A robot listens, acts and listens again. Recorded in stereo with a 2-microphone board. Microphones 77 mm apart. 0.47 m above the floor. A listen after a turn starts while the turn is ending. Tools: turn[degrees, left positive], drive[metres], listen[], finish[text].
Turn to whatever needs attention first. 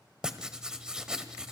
Action: listen[]
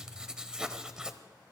Action: listen[]
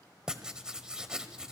Action: finish[I can't make out anything urgent to turn to.]